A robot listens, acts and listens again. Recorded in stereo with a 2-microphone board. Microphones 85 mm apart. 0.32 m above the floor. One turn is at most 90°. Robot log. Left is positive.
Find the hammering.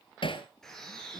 cmd yaw +90
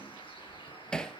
note: So it is at 10° left.
cmd yaw +10
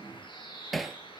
end: Found it: hammering, straight ahead, 1 to 2 m away.